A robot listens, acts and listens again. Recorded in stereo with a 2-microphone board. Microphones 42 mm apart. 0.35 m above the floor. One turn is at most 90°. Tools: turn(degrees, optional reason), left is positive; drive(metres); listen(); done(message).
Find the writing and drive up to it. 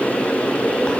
listen()
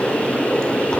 listen()
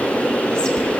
done("I can't make out writing to turn to.")